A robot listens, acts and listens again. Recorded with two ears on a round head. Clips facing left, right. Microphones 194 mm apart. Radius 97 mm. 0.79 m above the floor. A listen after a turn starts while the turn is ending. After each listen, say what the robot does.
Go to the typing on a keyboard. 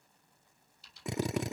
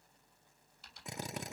Turn 45° right.
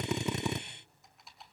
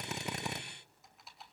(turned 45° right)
Drive 1.0 m forward.
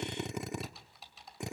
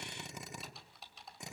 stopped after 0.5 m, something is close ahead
Something is in my way. I am facing the typing on a keyboard but have not reached it.